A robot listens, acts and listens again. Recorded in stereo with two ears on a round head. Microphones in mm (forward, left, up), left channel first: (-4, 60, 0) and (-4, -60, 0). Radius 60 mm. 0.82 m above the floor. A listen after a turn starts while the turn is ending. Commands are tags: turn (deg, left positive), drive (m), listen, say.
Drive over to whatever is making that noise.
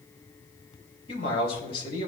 <turn deg="40"/>
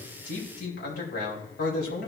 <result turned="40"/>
<turn deg="95"/>
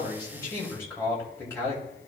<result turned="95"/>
<turn deg="20"/>
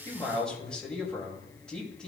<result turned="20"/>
<drive m="1.0"/>
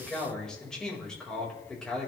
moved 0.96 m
<drive m="1.0"/>
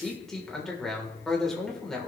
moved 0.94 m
<drive m="1.0"/>
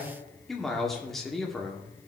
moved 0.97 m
<drive m="1.0"/>
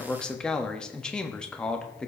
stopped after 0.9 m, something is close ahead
<turn deg="10"/>
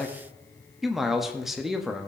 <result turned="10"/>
<say>I am next to the man speaking.</say>